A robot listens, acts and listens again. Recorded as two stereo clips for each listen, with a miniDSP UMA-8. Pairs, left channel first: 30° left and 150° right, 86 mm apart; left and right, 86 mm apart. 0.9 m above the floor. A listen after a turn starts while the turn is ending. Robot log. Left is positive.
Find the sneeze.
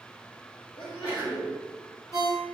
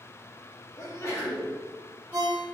note: The sneeze: 40° left.
cmd yaw +40
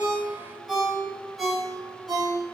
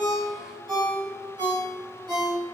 end: Facing where the sneeze came from. I can't hear it now.